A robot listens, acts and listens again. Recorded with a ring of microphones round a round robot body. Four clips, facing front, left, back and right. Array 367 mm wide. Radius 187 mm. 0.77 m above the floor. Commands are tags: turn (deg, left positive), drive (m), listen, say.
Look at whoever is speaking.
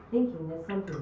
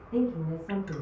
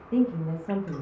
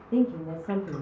<turn deg="-130"/>
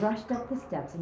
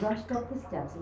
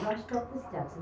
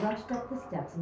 <say>Found it: a woman speaking, straight ahead.</say>